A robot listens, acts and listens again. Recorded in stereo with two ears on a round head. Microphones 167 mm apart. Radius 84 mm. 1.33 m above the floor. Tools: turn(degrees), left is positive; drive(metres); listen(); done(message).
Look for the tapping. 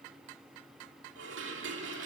listen()
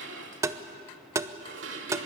turn(degrees=-15)
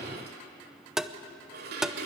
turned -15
done("Found it: tapping, straight ahead.")